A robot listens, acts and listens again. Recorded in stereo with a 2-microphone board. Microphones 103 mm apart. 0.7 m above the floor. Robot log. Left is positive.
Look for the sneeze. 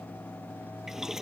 cmd idle
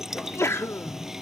note: The sneeze: about 25° left or 155° left.
cmd yaw +25
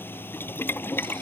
cmd idle
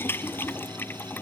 end: I heard a sneeze, but can't make it out now. It was about straight ahead or 130° left.